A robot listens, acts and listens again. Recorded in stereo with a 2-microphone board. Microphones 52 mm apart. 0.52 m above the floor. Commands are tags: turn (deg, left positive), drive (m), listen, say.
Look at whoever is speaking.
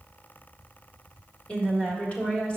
<turn deg="25"/>
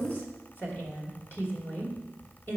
<turn deg="125"/>
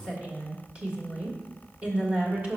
<turn deg="-30"/>
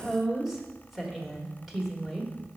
<say>Facing the woman speaking, 1 to 2 m away.</say>